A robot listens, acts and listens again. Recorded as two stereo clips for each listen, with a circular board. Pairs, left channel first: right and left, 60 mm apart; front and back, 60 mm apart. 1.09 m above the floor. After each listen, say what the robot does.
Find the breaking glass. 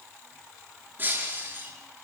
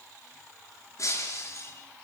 Turn 35° left.
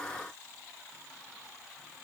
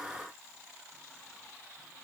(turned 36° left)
Facing where the breaking glass came from. I can't hear it now.